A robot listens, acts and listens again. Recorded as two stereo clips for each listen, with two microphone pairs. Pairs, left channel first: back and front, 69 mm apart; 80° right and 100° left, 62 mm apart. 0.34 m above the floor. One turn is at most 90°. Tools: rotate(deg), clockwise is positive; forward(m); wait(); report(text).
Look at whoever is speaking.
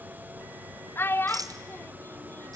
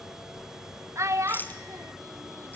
rotate(-90)
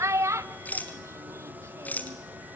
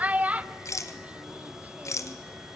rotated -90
rotate(-35)
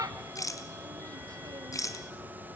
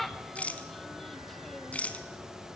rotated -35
report("Facing the child speaking.")